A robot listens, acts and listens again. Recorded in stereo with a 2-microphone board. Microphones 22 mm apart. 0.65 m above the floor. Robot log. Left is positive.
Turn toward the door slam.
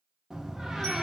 note: The door slam: about 25° right or 155° right.
cmd yaw -25
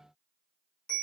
cmd idle
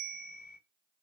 end: I heard a door slam, but can't make it out now. It was about straight ahead or 130° right.